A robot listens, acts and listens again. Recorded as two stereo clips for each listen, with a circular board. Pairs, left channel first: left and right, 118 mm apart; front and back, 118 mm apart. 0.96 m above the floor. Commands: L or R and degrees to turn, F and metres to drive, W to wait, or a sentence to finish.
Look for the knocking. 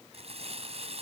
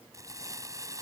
W
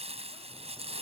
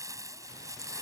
W
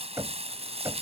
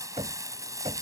R150
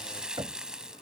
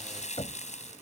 R40
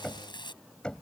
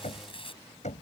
Facing the knocking.